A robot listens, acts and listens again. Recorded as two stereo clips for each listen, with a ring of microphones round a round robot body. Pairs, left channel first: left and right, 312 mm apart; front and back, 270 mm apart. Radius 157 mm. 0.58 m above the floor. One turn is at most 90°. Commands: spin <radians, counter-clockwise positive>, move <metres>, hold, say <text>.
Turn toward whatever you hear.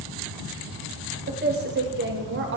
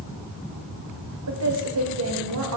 spin -1.57
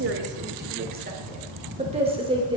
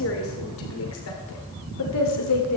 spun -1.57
spin -0.26
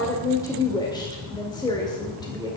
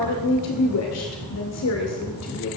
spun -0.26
spin 0.26
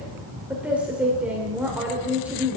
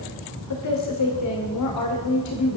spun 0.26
say Facing the woman speaking.